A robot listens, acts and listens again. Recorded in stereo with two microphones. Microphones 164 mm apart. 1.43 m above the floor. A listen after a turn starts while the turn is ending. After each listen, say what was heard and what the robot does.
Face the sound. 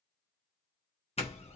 The doorbell: about 40° left or 140° left. Turn 40° left.
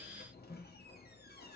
So it is at 100° left. Turn 100° left.
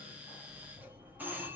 The doorbell is now 10° right. Turn 10° right.
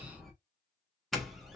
Found it: a doorbell, straight ahead, 1 to 2 m away.